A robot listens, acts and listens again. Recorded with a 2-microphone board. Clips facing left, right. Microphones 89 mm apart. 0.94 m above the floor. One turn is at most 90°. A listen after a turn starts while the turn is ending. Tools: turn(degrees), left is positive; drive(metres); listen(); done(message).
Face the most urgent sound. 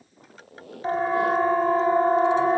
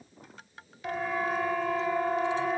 turn(degrees=35)
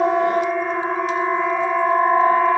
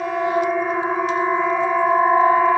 done("Facing the siren.")